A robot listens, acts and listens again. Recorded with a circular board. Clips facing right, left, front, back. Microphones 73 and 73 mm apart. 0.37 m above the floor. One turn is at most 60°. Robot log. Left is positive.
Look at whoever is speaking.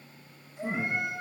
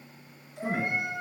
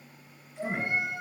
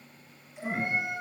note: The man speaking: 70° left.
cmd yaw +60
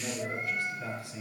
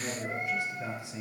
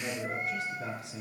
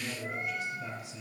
note: The man speaking is now 20° left.
cmd yaw +20
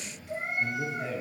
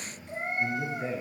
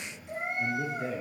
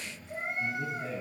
end: Found it: a man speaking, straight ahead, over 4 m away.